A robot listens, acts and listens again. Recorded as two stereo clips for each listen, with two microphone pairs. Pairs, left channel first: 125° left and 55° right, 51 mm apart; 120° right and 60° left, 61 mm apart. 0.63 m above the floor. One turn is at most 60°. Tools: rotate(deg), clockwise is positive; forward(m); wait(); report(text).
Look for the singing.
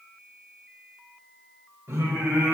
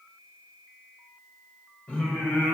rotate(60)
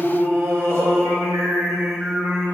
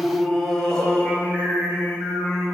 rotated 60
rotate(60)
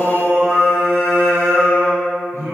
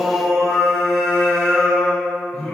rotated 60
rotate(45)
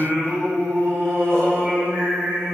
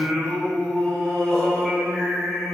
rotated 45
rotate(25)
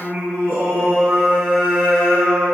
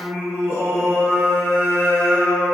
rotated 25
report("Facing the singing, 2 to 4 m away.")